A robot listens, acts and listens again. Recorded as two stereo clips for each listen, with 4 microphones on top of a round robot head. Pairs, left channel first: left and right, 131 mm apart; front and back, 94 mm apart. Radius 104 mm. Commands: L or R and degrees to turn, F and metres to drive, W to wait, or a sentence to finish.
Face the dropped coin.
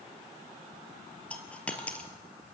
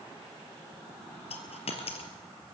L10
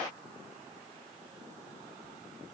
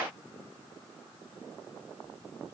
Facing where the dropped coin came from. I can't hear it now.